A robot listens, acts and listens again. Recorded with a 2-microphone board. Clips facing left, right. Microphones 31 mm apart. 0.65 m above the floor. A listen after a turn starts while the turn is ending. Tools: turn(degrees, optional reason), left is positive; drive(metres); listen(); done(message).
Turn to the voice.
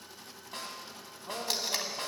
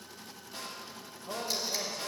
turn(degrees=20, reason="The man speaking: about 20° left or 160° left.")
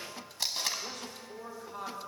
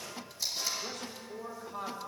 done("Found it: a man speaking, straight ahead.")